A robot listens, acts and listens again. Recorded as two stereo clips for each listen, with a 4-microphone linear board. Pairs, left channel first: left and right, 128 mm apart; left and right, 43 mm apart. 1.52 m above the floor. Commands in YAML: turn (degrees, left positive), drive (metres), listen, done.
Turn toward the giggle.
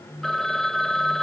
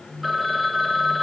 listen: true
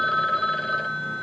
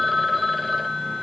listen: true
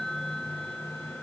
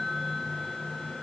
done: "I can't make out a giggle, only a phone ringing."